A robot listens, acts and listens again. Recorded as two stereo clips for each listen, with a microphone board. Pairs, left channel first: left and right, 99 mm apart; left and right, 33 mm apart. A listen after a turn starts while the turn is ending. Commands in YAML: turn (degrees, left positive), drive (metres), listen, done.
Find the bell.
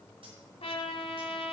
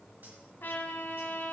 listen: true
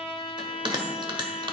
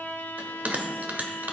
turn: -50
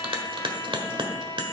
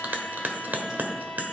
turn: -70
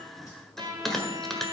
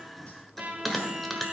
done: "Facing the bell."